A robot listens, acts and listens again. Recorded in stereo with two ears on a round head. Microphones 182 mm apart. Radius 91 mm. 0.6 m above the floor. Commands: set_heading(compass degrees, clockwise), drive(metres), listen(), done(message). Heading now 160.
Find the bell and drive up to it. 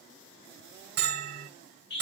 set_heading(215)
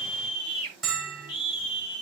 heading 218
drive(1.0)
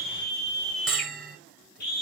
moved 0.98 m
drive(1.0)
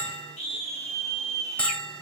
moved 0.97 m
set_heading(208)
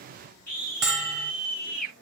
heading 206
drive(1.0)
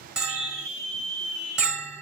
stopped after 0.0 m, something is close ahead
done("I am next to the bell.")